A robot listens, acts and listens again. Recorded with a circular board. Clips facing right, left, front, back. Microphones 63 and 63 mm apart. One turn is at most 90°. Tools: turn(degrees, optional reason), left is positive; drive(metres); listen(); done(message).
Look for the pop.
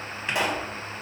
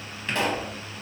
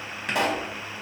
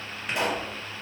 turn(degrees=-15, reason="The pop: 15° right.")
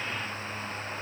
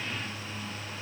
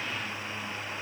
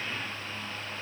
done("I heard a pop from this way, but can't make it out now.")